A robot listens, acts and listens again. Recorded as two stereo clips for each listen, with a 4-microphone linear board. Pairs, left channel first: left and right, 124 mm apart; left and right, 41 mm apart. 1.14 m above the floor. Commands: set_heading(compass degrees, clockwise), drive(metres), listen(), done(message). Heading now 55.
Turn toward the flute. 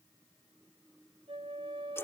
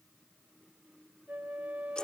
set_heading(100)
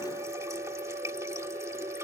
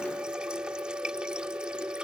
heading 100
set_heading(190)
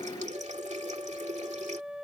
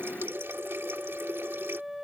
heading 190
done("Facing the flute.")